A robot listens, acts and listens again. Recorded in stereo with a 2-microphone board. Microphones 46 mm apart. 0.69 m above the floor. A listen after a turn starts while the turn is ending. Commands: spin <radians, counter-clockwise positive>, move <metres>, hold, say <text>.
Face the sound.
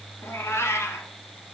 spin 1.57
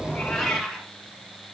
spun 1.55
spin -0.17
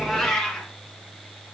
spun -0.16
say Found it: a cat meowing, straight ahead, 1 to 2 m away.